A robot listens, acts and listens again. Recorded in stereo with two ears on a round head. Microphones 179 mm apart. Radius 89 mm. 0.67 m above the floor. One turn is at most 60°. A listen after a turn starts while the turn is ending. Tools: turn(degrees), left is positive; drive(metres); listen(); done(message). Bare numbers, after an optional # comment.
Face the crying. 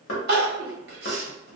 # The crying: about 55° right or 125° right.
turn(-55)
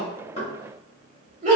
# So it is at 45° right.
turn(-45)
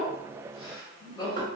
# The crying is now 25° left.
turn(25)
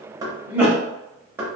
# The crying is now 15° right.
turn(-15)
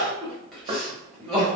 done("Facing the crying.")